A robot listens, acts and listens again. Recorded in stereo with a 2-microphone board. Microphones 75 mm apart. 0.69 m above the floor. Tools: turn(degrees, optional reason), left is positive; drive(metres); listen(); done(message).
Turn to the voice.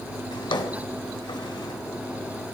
listen()
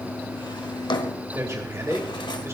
turn(degrees=-40, reason="The man speaking: about 40° right or 140° right.")
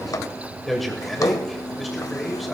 done("Found it: a man speaking, straight ahead, 2 to 4 m away.")